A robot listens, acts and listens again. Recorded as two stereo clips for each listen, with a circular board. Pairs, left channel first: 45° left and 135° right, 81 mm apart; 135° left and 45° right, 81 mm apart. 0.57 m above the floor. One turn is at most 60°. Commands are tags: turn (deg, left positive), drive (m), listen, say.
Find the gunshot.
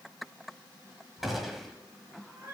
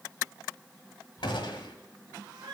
<turn deg="60"/>
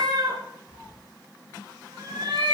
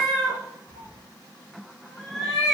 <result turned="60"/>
<turn deg="60"/>
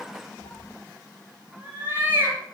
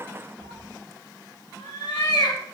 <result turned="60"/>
<turn deg="15"/>
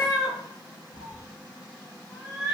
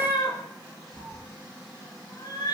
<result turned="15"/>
<say>I heard a gunshot from this way, but can't make it out now.</say>